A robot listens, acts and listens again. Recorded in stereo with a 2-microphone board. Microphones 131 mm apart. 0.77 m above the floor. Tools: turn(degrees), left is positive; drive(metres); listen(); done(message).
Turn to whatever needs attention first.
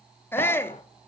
turn(degrees=15)
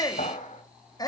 turn(degrees=150)
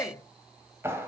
turn(degrees=25)
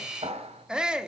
turn(degrees=-10)
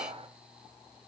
listen()
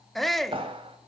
done("Found it: a shout, straight ahead.")